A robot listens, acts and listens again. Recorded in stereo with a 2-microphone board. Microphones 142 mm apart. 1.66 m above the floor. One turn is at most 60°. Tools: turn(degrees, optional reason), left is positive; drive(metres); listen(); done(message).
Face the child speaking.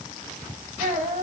turn(degrees=-60, reason="The child speaking: about 70° right or 110° right.")
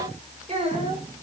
turn(degrees=-45, reason="So it is at 45° right.")
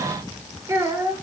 turn(degrees=-20, reason="The child speaking is now 20° right.")
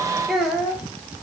done("Facing the child speaking.")